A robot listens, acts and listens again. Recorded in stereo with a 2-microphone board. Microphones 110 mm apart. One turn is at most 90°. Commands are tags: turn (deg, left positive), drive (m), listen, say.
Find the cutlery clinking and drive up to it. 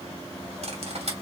<turn deg="-65"/>
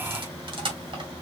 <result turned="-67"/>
<turn deg="-45"/>
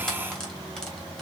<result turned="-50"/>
<drive m="1.0"/>
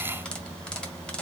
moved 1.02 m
<drive m="1.0"/>
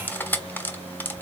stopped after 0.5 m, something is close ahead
<turn deg="15"/>
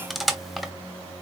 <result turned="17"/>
<say>Arrived at the cutlery clinking, straight ahead.</say>